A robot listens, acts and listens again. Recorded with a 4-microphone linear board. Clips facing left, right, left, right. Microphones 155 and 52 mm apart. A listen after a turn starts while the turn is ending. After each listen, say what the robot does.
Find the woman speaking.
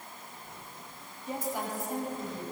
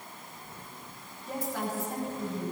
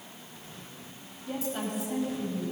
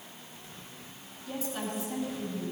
Turn 30° left.
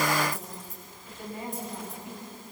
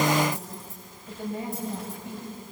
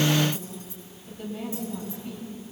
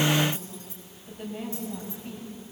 Turn 25° right.
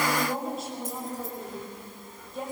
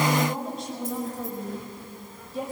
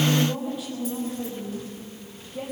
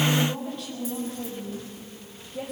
Facing the woman speaking, over 4 m away.